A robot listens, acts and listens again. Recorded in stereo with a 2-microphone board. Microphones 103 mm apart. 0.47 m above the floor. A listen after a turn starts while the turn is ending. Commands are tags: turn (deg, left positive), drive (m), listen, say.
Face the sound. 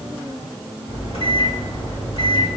<turn deg="60"/>
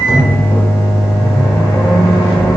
<turn deg="30"/>
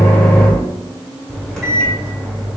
<say>Found it: a microwave, straight ahead, 1 to 2 m away.</say>